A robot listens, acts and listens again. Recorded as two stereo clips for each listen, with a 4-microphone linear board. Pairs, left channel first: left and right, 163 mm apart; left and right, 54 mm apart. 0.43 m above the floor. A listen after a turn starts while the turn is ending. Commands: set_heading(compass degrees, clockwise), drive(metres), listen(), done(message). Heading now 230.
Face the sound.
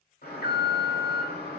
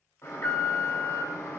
set_heading(160)
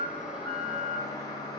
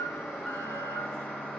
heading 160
set_heading(135)
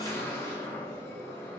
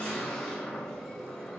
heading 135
set_heading(120)
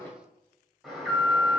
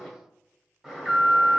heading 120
done("Found it: an alarm, straight ahead, 1 to 2 m away.")